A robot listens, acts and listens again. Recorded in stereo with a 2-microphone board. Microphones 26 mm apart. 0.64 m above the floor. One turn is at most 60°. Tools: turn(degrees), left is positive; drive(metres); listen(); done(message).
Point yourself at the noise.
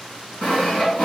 turn(degrees=55)
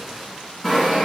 done("Found it: sawing, straight ahead, 1 to 2 m away.")